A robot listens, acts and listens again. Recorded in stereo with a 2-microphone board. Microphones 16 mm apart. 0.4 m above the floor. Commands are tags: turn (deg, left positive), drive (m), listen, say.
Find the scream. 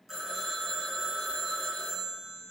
<listen/>
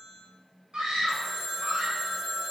<turn deg="-55"/>
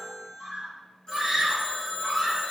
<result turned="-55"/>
<turn deg="-30"/>
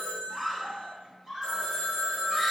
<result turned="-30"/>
<say>Facing the scream.</say>